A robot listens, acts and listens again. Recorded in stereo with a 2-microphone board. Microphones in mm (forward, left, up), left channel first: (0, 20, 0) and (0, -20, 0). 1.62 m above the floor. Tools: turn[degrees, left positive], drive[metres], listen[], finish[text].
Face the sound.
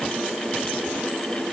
Action: listen[]
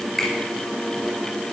Action: turn[30]
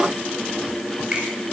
Thought: So it is at 25° right.
Action: turn[-25]
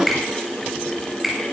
Action: finish[Found it: a finger snap, straight ahead, over 4 m away.]